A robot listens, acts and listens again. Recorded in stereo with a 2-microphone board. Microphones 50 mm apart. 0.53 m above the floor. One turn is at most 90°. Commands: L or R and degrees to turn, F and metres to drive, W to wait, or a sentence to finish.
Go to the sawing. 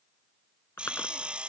R25
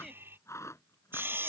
R90
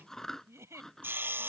R45
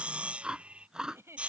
R25
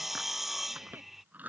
F1.0
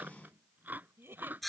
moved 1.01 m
F1.0
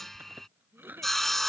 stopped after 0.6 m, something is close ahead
Arrived at the sawing, straight ahead.